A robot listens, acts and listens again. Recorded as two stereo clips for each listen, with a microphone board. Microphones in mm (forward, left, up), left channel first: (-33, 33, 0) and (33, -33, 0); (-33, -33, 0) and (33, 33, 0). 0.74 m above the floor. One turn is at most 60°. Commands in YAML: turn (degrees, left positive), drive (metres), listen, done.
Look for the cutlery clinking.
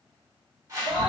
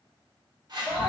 listen: true
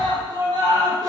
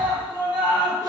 listen: true
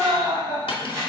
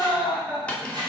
turn: 60
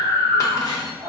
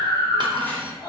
turn: 60
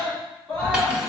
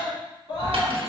turn: 30
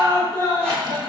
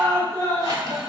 done: "I heard cutlery clinking from this way, but can't make it out now."